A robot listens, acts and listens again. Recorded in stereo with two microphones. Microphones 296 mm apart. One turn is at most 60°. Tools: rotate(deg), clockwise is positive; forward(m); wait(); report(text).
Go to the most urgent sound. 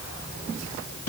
wait()
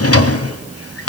wait()
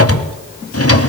report("I can't make out anything urgent to turn to.")